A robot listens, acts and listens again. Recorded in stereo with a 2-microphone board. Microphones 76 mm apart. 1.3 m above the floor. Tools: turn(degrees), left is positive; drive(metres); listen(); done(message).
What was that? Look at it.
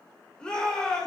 turn(degrees=30)
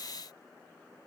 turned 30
listen()
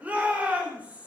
turn(degrees=-20)
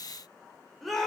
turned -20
done("Found it: a shout, straight ahead, over 4 m away.")